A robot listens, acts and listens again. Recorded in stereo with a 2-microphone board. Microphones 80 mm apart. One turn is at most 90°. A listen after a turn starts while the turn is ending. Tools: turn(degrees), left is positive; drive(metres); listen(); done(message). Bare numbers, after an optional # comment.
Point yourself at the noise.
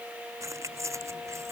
# The keys jangling: about 40° right or 140° right.
turn(-40)
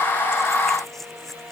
done("Facing the keys jangling.")